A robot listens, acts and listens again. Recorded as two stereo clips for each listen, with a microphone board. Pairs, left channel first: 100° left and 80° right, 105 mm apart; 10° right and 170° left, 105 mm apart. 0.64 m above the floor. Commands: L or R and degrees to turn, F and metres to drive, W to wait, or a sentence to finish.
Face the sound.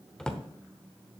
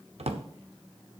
L180
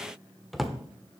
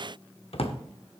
L10
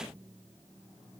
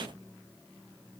W
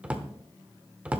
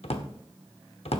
Found it: a drawer, straight ahead, 1 to 2 m away.